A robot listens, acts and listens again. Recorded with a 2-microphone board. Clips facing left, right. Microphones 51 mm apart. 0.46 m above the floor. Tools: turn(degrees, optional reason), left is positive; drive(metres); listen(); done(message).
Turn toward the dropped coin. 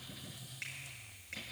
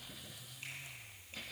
listen()
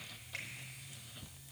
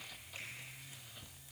listen()
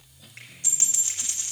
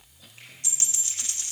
turn(degrees=25, reason="The dropped coin: about 25° left or 155° left.")
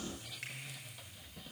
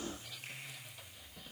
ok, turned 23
listen()
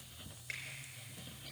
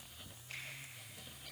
done("I heard a dropped coin, but can't make it out now. It was about straight ahead or 135° left.")